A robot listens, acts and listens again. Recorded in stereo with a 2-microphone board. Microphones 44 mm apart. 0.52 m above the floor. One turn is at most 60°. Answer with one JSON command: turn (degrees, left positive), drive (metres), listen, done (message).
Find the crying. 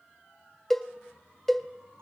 {"listen": true}
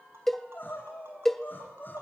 {"turn": 45}
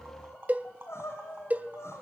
{"turn": 60}
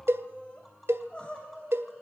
{"turn": 25}
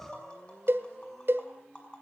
{"done": "Found it: crying, straight ahead, over 4 m away."}